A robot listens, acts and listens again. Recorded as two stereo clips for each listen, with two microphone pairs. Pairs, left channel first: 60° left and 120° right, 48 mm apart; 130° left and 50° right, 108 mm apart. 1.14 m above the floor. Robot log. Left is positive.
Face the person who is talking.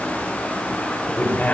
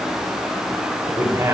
note: The man speaking: 10° left.
cmd yaw +10
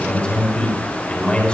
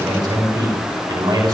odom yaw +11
end: Facing the man speaking, 2 to 4 m away.